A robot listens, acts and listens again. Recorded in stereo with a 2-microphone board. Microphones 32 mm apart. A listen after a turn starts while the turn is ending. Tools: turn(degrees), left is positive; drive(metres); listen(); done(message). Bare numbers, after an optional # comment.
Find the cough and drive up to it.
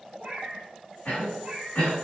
# The cough: about 75° left or 105° left.
turn(75)
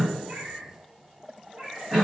drive(1.0)
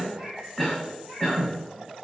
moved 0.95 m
drive(1.0)
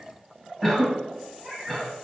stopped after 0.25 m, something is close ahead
done("Arrived at the cough, straight ahead.")